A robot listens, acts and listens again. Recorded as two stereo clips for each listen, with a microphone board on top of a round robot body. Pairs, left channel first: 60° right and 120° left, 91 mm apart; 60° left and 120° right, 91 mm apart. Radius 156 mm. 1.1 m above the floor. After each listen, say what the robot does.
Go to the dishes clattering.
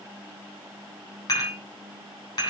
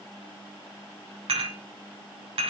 Turn 110° right.
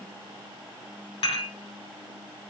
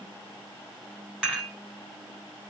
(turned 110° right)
Turn 40° right.
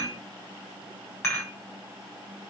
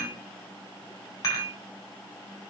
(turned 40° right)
Drive 1.0 m forward.
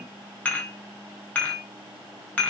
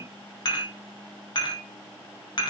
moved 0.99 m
Turn 10° left.
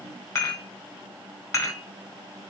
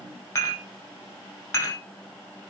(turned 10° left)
Drive 1.0 m forward.
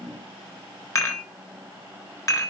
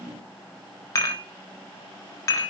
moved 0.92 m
Drive 1.0 m forward.
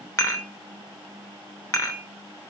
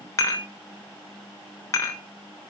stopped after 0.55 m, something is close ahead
Arrived at the dishes clattering, straight ahead.